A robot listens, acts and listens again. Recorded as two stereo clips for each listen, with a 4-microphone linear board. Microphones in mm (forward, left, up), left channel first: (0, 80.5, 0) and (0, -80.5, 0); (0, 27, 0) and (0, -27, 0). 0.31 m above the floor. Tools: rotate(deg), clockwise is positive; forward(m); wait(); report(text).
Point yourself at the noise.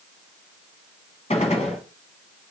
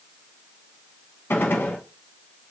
rotate(-45)
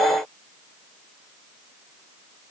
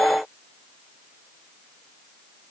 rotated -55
wait()
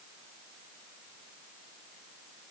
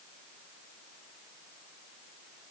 report("I heard a gunshot, but can't make it out now. It was about 10° right or 80° left.")